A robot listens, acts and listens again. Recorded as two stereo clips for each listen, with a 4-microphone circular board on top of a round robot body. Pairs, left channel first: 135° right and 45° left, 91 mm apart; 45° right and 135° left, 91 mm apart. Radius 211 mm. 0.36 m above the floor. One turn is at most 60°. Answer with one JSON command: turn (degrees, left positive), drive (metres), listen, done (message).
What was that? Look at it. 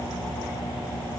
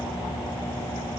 {"listen": true}
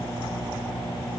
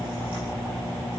{"listen": true}
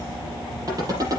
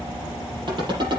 {"turn": 60}
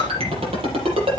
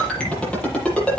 {"turn": 35}
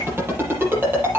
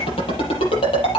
{"turn": -20}
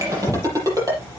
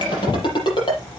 {"turn": -10}
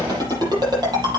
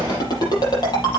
{"done": "Facing the ringtone, over 4 m away."}